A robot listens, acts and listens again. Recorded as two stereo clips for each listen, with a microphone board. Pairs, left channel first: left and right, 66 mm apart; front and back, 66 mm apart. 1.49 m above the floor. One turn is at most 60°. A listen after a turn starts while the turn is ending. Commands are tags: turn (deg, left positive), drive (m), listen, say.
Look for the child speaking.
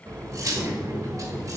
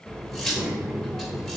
<turn deg="-60"/>
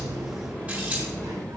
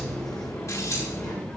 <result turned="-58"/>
<turn deg="-60"/>
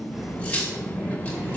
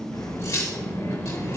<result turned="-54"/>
<turn deg="-35"/>
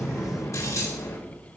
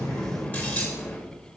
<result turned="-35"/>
<say>Facing the child speaking, 2 to 4 m away.</say>